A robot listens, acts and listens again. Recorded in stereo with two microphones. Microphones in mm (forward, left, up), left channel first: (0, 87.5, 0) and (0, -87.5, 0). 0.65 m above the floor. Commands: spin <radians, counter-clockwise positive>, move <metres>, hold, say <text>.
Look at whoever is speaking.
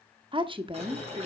spin -0.52
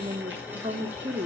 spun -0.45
spin -2.09
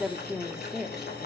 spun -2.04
say Found it: a woman speaking, straight ahead.